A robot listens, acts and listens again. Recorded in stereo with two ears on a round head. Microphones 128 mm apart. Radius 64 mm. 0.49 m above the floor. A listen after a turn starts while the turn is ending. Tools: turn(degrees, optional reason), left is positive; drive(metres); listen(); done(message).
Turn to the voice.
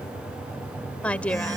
turn(degrees=30)
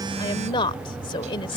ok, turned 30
turn(degrees=140, reason="So it is at 140° left.")
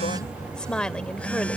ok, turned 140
done("Facing the woman speaking.")